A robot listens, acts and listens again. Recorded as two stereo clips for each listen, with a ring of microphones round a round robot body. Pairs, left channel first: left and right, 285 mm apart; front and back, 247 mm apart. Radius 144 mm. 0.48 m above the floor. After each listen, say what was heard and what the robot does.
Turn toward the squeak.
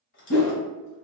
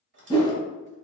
The squeak: 140° left. Turn 140° left.
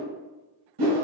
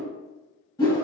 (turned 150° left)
Nothing new. It was at 10° right. Turn 10° right.
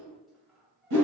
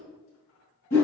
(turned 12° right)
Facing the squeak.